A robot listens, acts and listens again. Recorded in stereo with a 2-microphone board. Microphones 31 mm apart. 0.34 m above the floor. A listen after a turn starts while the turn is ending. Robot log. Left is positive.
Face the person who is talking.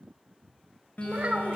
note: The child speaking: about 55° right or 125° right.
cmd yaw -55
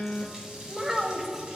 note: So it is at 15° right.
cmd yaw -15
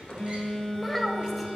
end: Found it: a child speaking, straight ahead.